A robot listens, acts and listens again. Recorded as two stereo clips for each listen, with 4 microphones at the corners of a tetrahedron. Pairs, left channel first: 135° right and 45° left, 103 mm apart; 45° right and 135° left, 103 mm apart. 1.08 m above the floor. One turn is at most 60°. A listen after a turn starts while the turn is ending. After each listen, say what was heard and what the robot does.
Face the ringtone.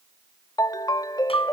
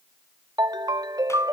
The ringtone: straight behind. Turn 60° left.
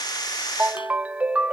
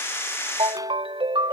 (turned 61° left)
The ringtone is now 120° left. Turn 60° left.
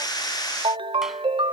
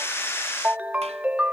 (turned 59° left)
The ringtone is now 60° left. Turn 60° left.
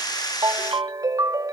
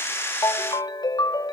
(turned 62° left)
Facing the ringtone.